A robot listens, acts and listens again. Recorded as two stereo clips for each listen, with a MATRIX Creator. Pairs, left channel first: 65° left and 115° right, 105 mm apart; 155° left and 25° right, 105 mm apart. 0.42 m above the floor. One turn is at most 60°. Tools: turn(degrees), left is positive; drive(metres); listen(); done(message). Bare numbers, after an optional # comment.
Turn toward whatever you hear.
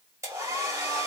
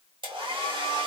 # The hair dryer: 55° right.
turn(-55)
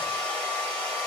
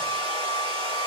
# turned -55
# The hair dryer is now 10° right.
turn(-10)
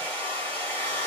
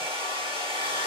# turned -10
done("Facing the hair dryer.")